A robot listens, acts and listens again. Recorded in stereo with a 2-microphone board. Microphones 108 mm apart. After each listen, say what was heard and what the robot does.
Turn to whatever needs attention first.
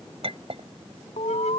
Turn 90° left.
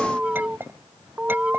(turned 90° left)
So it is at 10° right. Turn 10° right.
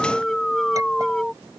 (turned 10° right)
Found it: an alarm, straight ahead.